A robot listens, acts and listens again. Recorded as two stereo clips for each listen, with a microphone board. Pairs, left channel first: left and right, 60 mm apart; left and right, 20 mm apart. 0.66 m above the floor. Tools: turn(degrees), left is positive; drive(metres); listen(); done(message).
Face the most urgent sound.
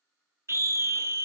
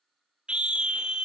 turn(degrees=-50)
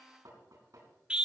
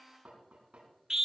turn(degrees=-20)
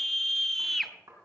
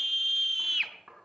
done("Facing the scream.")